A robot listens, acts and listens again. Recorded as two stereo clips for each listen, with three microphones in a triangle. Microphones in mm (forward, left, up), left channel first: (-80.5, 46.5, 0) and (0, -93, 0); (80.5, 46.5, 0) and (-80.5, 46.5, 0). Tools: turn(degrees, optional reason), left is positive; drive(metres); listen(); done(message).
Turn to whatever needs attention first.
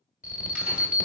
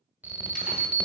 turn(degrees=100, reason="The alarm: 100° left.")
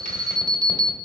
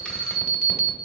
done("Facing the alarm.")